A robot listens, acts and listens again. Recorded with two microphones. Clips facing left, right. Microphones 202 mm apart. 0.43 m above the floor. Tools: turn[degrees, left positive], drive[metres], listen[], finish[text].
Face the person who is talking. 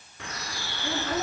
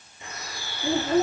Thought: The child speaking: about 25° right or 155° right.
Action: turn[-25]
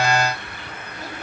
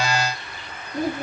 Thought: So it is at 125° right.
Action: turn[-125]
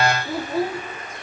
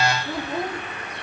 Action: finish[Found it: a child speaking, straight ahead, 1 to 2 m away.]